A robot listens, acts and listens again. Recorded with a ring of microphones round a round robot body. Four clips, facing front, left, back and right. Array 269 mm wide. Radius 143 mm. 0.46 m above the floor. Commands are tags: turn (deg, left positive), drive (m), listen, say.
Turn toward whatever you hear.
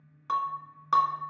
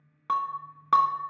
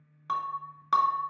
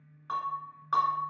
<turn deg="100"/>
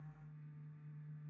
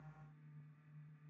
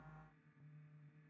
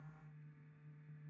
<say>Facing where the breaking glass came from. I can't hear it now.</say>